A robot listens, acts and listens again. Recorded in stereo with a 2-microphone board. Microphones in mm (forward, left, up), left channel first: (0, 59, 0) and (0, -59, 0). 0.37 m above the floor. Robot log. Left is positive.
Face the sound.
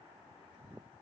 cmd idle
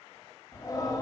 note: The singing: about 35° left or 145° left.
cmd yaw +35
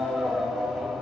end: Found it: singing, straight ahead.